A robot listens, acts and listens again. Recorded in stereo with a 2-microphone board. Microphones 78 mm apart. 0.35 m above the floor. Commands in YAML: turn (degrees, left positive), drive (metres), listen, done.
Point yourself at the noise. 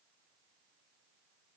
listen: true
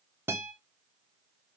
turn: -30
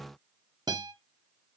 turn: -115
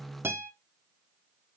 turn: -30
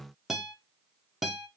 done: "Found it: a guitar, straight ahead, under 1 m away."